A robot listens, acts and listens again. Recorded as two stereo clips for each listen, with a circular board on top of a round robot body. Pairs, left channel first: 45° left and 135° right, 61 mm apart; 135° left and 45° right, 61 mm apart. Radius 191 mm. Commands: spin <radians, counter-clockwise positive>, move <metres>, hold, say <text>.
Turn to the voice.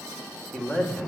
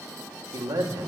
spin -0.61
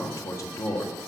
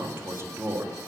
say Facing the man speaking.